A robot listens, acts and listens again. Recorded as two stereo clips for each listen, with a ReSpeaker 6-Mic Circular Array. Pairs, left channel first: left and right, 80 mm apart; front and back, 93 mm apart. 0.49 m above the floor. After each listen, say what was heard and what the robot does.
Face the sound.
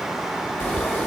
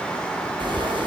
The frying: 155° left. Turn 155° left.
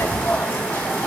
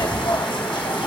The frying is now 25° left. Turn 25° left.
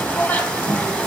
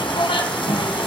The frying is now 15° left. Turn 15° left.
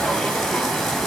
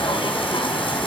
Facing the frying, 2 to 4 m away.